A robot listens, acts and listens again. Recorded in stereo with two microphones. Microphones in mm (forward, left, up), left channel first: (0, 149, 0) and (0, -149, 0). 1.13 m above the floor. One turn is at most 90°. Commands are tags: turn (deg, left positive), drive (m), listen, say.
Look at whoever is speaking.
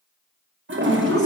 <turn deg="25"/>
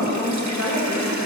<turn deg="90"/>
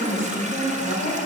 <turn deg="15"/>
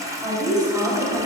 <say>Found it: a woman speaking, straight ahead.</say>